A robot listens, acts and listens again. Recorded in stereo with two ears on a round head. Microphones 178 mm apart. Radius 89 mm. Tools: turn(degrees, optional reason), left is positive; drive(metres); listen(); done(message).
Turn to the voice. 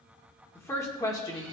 turn(degrees=20, reason="The woman speaking: about 20° left or 160° left.")
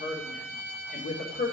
turn(degrees=125, reason="So it is at 125° left.")
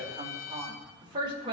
turn(degrees=-25, reason="The woman speaking is now 25° right.")
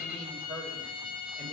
turn(degrees=-10, reason="The woman speaking is now 10° right.")
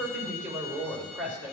done("Found it: a woman speaking, straight ahead.")